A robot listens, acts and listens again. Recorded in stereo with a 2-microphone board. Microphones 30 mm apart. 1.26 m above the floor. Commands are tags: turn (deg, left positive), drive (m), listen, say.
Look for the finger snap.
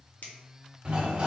<turn deg="75"/>
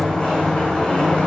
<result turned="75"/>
<listen/>
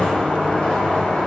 <listen/>
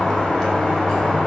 <say>I heard a finger snap, but can't make it out now. It was about straight ahead or 30° left.</say>